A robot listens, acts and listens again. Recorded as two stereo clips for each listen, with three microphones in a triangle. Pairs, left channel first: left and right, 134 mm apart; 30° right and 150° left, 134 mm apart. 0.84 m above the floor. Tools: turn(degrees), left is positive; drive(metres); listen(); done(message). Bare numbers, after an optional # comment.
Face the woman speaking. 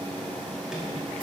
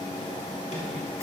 listen()
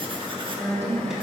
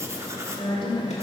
# The woman speaking: 20° left.
turn(20)
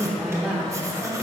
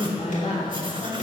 # The woman speaking is now 10° right.
turn(-10)
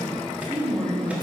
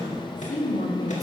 # The woman speaking is now 20° right.
turn(-20)
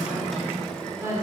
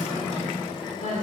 # The woman speaking is now 20° right.
turn(-20)
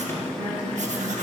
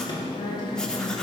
done("Facing the woman speaking, 2 to 4 m away.")